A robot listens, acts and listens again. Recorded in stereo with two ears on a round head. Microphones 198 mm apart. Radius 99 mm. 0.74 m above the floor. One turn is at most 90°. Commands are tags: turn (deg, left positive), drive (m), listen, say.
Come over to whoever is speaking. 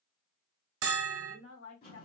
<turn deg="70"/>
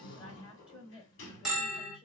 <turn deg="25"/>
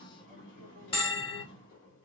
<listen/>
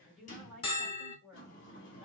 <drive m="1.0"/>
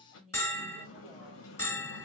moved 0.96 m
<drive m="1.0"/>
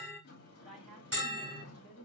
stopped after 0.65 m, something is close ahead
<say>Arrived at the woman speaking, straight ahead.</say>